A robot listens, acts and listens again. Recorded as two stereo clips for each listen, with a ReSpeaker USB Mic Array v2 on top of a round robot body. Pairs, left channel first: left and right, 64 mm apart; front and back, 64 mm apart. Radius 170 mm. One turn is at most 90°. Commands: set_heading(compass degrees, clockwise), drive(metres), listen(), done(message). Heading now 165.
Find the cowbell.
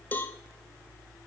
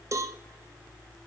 set_heading(75)
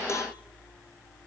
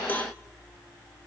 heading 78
set_heading(18)
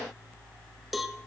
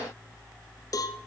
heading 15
done("Found it: a cowbell, straight ahead.")